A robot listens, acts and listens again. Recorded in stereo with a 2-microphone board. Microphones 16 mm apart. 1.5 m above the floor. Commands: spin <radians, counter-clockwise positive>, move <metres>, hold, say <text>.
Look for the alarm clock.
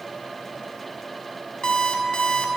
spin 1.05
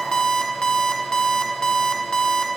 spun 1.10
spin 0.87
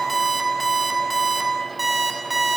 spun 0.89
say Facing the alarm clock, 1 to 2 m away.